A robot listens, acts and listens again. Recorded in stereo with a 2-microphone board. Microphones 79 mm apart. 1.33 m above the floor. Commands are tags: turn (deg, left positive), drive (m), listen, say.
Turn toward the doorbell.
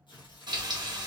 <listen/>
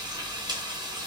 <listen/>
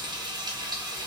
<say>I can't make out a doorbell to turn to.</say>